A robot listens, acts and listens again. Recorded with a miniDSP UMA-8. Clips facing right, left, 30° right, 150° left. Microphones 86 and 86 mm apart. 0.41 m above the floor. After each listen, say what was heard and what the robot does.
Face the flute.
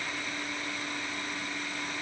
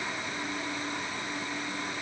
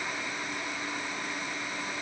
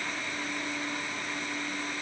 Keep listening.
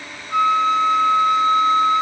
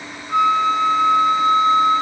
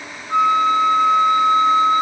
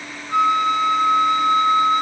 The flute: 135° left. Turn 135° left.
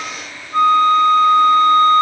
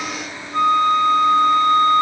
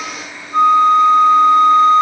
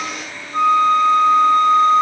The flute is now 15° left. Turn 15° left.
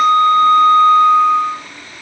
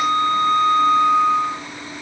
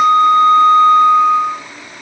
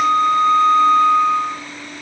Facing the flute.